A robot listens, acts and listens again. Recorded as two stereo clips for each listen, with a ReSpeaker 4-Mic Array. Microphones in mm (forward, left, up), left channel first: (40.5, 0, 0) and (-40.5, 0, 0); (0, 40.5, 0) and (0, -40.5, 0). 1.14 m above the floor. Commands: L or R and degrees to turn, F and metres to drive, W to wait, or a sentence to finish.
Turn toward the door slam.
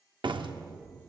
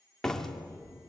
L175
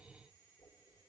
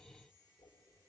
Facing where the door slam came from. I can't hear it now.